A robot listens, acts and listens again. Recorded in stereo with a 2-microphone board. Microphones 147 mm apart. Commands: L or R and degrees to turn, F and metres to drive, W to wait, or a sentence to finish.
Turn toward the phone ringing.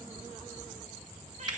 W
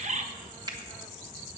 W
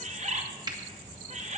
I can't make out a phone ringing to turn to.